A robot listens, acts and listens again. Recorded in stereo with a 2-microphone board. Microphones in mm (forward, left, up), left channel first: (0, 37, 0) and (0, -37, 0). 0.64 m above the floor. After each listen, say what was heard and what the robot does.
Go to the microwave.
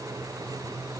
Keep listening.
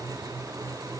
Keep listening.
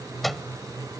Turn 30° left.
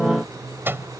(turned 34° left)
So it is at 30° right. Turn 30° right.
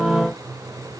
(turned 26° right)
Keep listening.
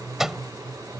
Drive 1.0 m forward.
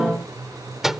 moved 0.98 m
Drive 1.0 m forward.
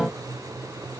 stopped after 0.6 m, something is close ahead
Keep listening.
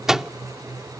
The microwave is now 10° right. Turn 10° right.
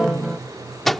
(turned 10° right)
Arrived at the microwave, straight ahead.